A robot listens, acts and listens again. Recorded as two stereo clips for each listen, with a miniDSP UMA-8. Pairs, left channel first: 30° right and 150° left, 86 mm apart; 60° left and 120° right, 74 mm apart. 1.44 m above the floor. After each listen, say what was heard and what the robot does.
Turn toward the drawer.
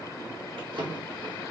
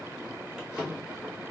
The drawer: 160° left. Turn 160° left.
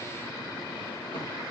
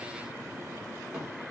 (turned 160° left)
Keep listening.
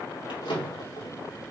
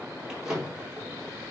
The drawer is now 40° right. Turn 40° right.
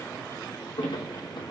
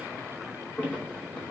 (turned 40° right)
The drawer is now 10° right. Turn 10° right.
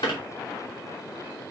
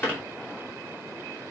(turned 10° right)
Facing the drawer, 2 to 4 m away.